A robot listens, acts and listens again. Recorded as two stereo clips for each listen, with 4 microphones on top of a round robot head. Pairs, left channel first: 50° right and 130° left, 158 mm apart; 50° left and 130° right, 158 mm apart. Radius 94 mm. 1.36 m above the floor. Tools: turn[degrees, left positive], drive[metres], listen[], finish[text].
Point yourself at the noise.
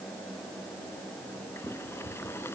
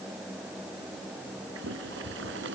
Thought: The boiling: 125° right.
Action: turn[-125]
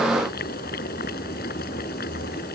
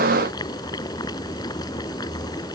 Thought: The boiling is now 15° right.
Action: turn[-15]
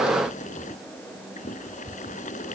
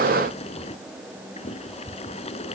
Action: finish[Found it: boiling, straight ahead.]